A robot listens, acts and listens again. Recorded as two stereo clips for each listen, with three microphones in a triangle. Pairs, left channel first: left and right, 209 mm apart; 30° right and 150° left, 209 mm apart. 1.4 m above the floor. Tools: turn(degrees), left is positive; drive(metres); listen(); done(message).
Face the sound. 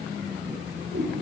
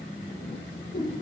turn(degrees=-70)
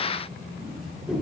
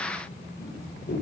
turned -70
listen()
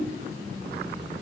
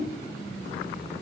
listen()
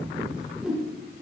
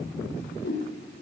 done("Found it: a whoosh, straight ahead.")